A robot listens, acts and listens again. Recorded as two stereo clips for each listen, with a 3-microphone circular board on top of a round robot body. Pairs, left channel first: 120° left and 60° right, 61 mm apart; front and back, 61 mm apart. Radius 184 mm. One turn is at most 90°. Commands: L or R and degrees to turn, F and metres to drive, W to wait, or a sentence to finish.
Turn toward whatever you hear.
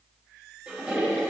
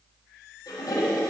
L15
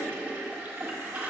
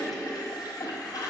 Facing the toilet flushing, 1 to 2 m away.